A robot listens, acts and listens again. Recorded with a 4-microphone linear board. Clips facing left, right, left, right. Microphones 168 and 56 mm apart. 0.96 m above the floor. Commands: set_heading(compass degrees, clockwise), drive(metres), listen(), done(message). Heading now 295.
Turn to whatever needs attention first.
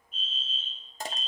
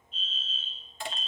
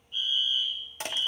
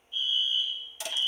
set_heading(240)
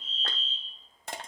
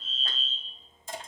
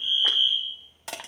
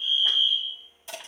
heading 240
set_heading(220)
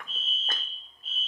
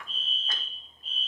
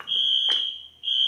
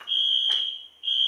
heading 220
done("Found it: a fire alarm, straight ahead, 2 to 4 m away.")